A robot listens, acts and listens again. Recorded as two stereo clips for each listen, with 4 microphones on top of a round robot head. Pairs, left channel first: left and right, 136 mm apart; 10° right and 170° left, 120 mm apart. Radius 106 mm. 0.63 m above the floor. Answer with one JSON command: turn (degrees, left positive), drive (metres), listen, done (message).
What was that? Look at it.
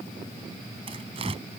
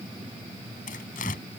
{"turn": -35}
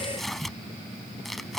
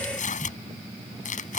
{"done": "Facing the tearing paper."}